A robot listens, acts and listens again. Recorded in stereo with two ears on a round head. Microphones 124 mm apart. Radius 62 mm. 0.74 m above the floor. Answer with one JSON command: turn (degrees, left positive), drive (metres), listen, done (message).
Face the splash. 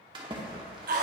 {"turn": -35}
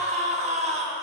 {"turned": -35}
{"listen": true}
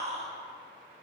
{"done": "I heard a splash, but can't make it out now. It was about straight ahead or 110° right."}